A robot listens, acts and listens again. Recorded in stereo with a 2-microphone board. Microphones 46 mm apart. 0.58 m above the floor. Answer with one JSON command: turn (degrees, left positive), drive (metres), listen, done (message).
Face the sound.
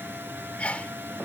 {"turn": 30}
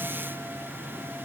{"listen": true}
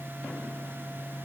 {"done": "I heard a sneeze, but can't make it out now. It was about straight ahead or 120° left."}